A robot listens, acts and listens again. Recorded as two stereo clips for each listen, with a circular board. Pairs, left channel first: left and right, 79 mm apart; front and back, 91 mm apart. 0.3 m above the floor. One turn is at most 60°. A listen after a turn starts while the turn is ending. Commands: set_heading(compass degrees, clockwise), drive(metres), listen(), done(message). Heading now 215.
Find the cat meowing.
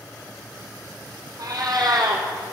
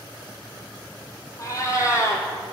set_heading(275)
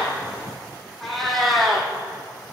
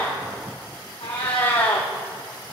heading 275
done("Facing the cat meowing.")